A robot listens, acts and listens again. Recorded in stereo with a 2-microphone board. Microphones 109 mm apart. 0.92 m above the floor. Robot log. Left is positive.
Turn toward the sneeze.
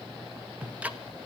cmd idle
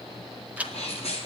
note: The sneeze: about 70° left or 110° left.
cmd yaw +70
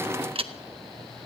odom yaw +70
cmd idle
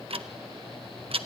end: I heard a sneeze, but can't make it out now. It was about straight ahead or 40° left.